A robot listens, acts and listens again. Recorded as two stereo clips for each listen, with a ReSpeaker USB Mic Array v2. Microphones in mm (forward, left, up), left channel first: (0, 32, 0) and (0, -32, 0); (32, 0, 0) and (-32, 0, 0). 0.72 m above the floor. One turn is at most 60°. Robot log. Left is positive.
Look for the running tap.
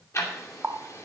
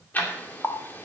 note: The running tap: 40° right.
cmd yaw -40
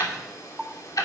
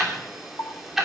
end: Found it: a running tap, straight ahead, under 1 m away.